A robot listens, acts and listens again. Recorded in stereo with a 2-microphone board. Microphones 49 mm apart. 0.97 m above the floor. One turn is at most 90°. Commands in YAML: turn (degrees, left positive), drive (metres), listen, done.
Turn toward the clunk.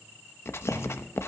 turn: 90
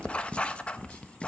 done: "Facing where the clunk came from. I can't hear it now."